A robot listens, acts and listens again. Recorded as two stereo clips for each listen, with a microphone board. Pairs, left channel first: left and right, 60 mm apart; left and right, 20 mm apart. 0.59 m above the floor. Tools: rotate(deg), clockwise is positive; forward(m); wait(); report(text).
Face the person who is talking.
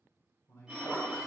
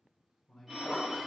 rotate(-40)
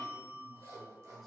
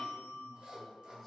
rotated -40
wait()
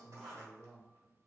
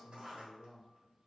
report("Facing the man speaking, 1 to 2 m away.")